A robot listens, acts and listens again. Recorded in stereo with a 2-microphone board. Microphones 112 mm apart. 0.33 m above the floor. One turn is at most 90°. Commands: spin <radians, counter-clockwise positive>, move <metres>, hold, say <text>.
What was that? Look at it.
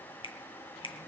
spin 0.79
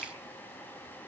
hold
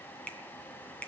spin 0.17
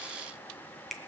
say Found it: a finger snap, straight ahead.